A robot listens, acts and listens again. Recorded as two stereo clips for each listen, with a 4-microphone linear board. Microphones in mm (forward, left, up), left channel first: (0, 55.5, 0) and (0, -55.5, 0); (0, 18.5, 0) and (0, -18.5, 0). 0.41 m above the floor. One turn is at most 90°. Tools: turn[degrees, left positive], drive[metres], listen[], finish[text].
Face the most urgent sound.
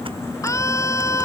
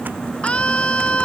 Thought: The scream: about 25° left or 155° left.
Action: turn[25]
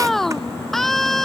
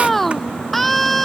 Action: finish[Facing the scream.]